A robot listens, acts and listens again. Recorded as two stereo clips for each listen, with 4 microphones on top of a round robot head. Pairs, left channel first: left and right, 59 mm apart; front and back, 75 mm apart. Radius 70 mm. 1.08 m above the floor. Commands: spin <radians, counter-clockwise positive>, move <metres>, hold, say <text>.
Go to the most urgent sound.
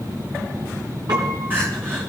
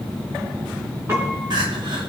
hold
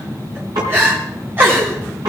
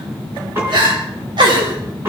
spin -2.62
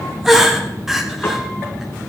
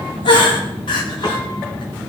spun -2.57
move 1.0
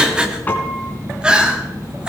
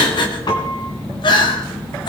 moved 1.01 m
spin -0.26
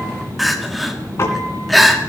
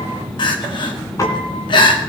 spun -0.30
move 1.0
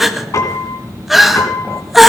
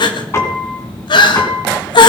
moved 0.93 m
move 1.0
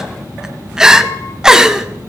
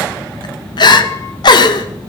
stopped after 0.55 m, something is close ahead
spin -0.17
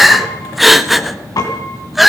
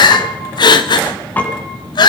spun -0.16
say Arrived at the crying, straight ahead.